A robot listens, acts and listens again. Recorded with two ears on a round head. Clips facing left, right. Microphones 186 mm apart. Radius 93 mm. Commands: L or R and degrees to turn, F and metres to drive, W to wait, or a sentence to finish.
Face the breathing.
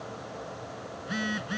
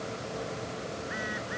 W
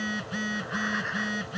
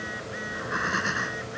R60
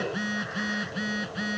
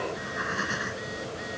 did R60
R60
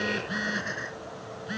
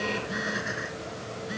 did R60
Facing the breathing.